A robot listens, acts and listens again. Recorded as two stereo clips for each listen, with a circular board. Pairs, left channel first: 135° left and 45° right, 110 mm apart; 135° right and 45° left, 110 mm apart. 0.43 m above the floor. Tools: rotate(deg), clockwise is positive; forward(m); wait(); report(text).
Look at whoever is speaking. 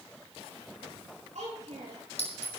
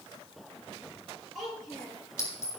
rotate(45)
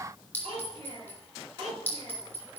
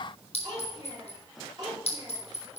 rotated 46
report("Facing the child speaking, over 4 m away.")